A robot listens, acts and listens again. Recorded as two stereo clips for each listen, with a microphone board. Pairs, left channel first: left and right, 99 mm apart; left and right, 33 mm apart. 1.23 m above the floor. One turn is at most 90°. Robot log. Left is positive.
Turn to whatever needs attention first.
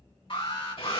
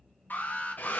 note: The alarm: about 60° left or 120° left.
cmd yaw +60
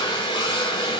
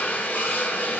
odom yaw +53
cmd idle
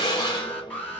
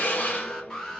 note: So it is at 15° left.
cmd yaw +15
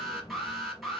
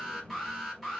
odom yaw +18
end: Found it: an alarm, straight ahead, 2 to 4 m away.